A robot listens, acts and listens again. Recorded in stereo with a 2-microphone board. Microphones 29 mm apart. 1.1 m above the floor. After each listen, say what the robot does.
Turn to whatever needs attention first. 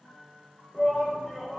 Turn 30° right.
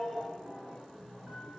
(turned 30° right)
Turn 15° left.
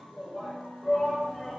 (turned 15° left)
Found it: a shout, straight ahead, under 1 m away.